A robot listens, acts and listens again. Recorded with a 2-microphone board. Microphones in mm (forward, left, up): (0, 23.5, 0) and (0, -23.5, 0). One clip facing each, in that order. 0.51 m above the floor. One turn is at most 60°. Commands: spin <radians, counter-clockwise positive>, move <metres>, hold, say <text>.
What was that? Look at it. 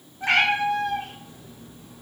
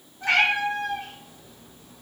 spin 0.35
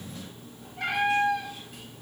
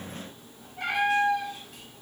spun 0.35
say Found it: a cat meowing, straight ahead, 1 to 2 m away.